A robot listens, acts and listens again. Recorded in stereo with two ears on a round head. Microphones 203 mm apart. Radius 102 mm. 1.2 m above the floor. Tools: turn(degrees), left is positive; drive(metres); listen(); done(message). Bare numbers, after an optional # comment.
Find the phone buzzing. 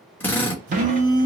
# The phone buzzing: about 55° right or 125° right.
turn(-55)
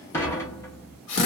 listen()
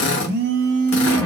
# So it is at 55° right.
turn(-55)
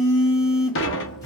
# The phone buzzing is now 15° left.
turn(15)
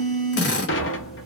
done("Found it: a phone buzzing, straight ahead.")